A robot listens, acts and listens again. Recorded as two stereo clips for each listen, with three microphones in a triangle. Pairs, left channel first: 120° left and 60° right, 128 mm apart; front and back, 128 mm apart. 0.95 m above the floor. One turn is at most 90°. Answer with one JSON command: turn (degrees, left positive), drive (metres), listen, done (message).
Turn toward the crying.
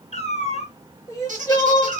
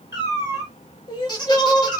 {"turn": 55}
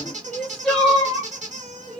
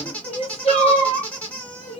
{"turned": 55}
{"turn": 35}
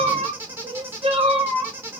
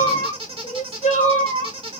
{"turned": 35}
{"turn": -20}
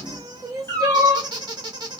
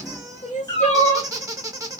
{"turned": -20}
{"done": "Found it: crying, straight ahead."}